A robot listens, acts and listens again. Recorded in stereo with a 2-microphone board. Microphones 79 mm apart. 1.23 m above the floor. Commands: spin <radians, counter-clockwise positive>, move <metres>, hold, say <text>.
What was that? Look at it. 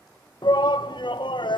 spin 1.31
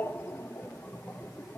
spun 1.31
spin 0.52
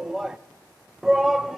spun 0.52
say Facing the shout, 1 to 2 m away.